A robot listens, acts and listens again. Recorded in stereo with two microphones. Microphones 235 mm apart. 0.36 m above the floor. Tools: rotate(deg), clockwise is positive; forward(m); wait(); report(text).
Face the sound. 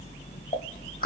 rotate(-35)
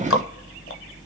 rotate(-105)
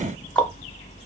report("Facing the ticking.")